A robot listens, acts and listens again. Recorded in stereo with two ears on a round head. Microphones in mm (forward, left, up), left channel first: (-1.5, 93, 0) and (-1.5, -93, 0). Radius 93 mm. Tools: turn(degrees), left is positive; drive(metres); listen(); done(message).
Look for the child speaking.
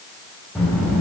turn(degrees=30)
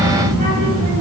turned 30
turn(degrees=-30)
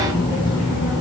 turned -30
turn(degrees=10)
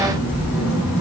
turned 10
done("Found it: a child speaking, straight ahead, over 4 m away.")